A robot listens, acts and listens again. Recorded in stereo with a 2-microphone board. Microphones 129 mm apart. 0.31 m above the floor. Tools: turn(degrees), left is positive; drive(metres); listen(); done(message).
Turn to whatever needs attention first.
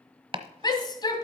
turn(degrees=35)
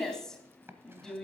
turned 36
done("Facing the shout.")